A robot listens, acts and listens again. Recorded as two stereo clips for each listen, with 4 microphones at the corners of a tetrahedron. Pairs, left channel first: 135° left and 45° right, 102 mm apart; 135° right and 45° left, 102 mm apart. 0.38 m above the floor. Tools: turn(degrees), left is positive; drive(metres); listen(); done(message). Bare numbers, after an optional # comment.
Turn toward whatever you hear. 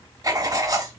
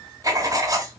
done("Facing the writing.")